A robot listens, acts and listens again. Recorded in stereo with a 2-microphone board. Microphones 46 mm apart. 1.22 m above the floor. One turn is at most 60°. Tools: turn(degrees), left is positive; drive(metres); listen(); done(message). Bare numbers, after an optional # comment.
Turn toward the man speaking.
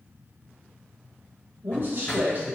# The man speaking: about 40° right or 140° right.
turn(-40)
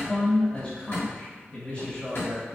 # So it is at 45° left.
turn(45)
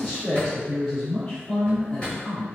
done("Found it: a man speaking, straight ahead, 2 to 4 m away.")